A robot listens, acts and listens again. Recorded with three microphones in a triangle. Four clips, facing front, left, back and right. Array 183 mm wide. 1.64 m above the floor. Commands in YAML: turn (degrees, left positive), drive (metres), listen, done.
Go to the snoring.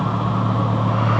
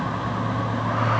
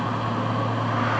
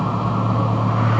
listen: true
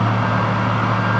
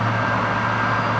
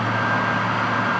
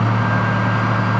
listen: true
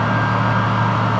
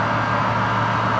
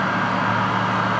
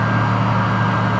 done: "I can't make out snoring to turn to."